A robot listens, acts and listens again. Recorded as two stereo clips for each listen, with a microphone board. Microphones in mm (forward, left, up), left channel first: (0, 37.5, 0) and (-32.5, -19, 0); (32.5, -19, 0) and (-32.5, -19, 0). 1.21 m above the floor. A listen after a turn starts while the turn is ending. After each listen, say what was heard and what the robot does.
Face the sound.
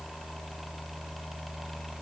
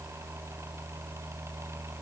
Keep listening.
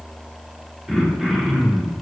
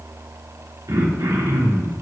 The throat clearing: 160° left. Turn 160° left.
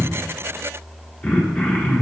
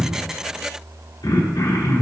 The throat clearing is now 10° right. Turn 10° right.
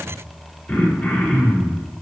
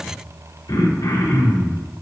Facing the throat clearing.